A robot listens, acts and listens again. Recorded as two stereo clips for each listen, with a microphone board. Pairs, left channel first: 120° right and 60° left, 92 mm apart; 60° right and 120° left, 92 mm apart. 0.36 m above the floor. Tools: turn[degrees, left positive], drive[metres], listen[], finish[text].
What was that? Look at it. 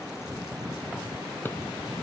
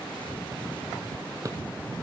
Thought: The drawer: 175° left.
Action: turn[175]
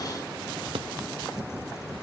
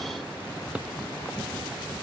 Thought: The drawer is now 45° left.
Action: turn[45]
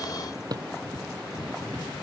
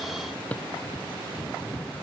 Thought: The drawer is now 15° left.
Action: turn[15]
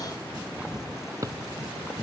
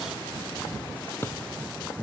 Action: finish[Facing the drawer.]